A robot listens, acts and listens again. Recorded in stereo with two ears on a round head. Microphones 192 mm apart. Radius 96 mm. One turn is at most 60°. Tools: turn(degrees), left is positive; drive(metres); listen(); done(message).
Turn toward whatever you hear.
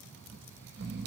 turn(degrees=-50)
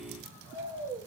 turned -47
turn(degrees=-20)
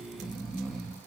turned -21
done("Found it: snoring, straight ahead.")